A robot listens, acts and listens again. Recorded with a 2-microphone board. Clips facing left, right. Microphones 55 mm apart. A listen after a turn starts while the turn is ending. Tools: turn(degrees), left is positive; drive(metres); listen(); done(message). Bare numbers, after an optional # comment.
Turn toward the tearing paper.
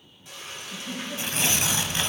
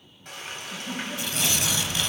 # The tearing paper: about 35° left or 145° left.
turn(35)
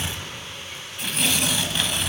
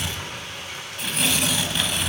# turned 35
done("Facing the tearing paper.")